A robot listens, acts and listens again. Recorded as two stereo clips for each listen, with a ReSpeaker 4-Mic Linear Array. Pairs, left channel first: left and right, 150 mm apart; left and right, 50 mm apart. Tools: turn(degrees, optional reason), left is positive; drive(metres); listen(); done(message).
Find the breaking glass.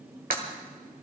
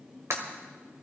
turn(degrees=-70, reason="The breaking glass: about 70° right or 110° right.")
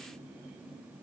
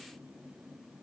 listen()
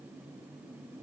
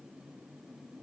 done("I heard breaking glass, but can't make it out now. It was about straight ahead or 40° right.")